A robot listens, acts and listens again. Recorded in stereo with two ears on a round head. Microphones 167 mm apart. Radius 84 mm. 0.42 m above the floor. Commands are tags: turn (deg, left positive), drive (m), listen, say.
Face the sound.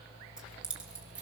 <turn deg="-30"/>
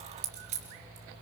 <turn deg="-140"/>
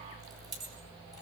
<turn deg="-20"/>
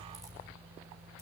<listen/>
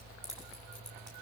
<say>Facing the keys jangling, over 4 m away.</say>